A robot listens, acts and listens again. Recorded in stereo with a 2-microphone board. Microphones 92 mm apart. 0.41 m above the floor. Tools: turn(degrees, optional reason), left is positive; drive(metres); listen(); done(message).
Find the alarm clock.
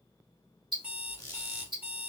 turn(degrees=-20, reason="The alarm clock: about 20° right or 160° right.")
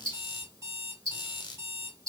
turn(degrees=-140, reason="So it is at 140° right.")
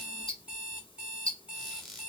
turn(degrees=-10, reason="The alarm clock is now 10° right.")
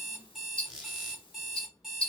done("Facing the alarm clock.")